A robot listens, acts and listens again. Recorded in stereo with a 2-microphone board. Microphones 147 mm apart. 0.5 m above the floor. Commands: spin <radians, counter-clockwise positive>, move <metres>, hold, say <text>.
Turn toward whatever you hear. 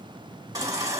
spin -0.44
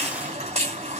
spin -2.27
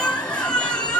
spin 0.17
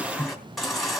say Found it: a baby crying, straight ahead, 2 to 4 m away.